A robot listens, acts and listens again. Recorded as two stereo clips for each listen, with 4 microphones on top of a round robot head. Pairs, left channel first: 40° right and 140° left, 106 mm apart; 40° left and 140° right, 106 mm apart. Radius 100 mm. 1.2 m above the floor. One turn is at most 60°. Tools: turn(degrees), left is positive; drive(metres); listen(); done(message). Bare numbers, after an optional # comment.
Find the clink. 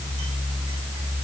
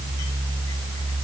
listen()
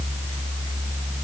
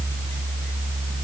listen()
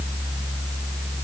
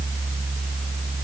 done("I can't make out a clink.")